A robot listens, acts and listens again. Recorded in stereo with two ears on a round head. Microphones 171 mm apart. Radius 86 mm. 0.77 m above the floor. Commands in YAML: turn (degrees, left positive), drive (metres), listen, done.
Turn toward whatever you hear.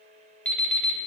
turn: 30
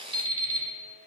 turn: -25
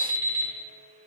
turn: -20
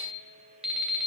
done: "Found it: an alarm clock, straight ahead."